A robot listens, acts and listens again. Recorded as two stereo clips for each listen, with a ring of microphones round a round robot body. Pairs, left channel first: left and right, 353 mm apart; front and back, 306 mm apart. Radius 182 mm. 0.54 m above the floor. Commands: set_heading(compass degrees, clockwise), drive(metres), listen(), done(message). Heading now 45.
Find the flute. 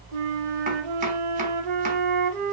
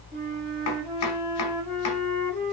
set_heading(130)
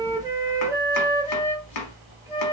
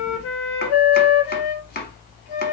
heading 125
set_heading(135)
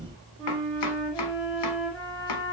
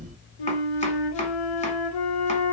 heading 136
done("Found it: a flute, straight ahead, under 1 m away.")